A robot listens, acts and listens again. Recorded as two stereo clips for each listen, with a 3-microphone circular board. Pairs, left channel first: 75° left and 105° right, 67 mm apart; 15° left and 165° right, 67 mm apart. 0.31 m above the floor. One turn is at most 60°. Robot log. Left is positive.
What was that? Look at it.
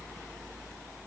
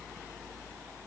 cmd idle
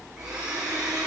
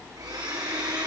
note: The blender: 175° left.
cmd yaw +60
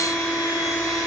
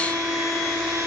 note: The blender is now 105° left.
cmd yaw +60
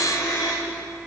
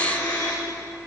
note: The blender is now 25° left.
cmd yaw +25
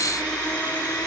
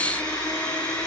end: Found it: a blender, straight ahead.